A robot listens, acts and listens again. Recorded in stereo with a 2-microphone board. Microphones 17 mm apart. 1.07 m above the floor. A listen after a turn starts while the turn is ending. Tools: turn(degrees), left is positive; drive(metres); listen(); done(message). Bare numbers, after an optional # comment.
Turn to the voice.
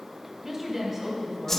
# The woman speaking: about 15° right or 165° right.
turn(-15)
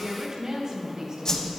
# So it is at 150° right.
turn(-150)
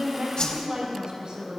# The woman speaking is now 65° right.
turn(-65)
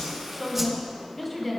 done("Found it: a woman speaking, straight ahead.")